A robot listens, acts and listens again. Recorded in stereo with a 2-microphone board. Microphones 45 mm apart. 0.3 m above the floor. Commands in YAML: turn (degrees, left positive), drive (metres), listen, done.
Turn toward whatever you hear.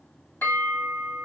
turn: 55
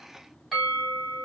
done: "Found it: a bell, straight ahead, 1 to 2 m away."